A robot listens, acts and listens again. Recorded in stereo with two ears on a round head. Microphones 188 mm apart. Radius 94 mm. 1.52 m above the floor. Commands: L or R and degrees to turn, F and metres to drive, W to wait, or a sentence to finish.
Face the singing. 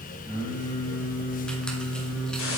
L30
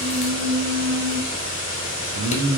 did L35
R80
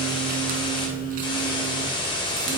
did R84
W
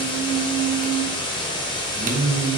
R30
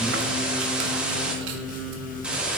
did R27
W
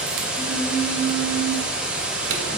Facing the singing.